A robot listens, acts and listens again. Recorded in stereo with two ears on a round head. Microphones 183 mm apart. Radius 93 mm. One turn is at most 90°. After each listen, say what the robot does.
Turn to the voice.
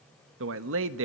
Turn 60° right.
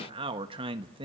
Turn 25° right.
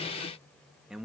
Found it: a man speaking, straight ahead.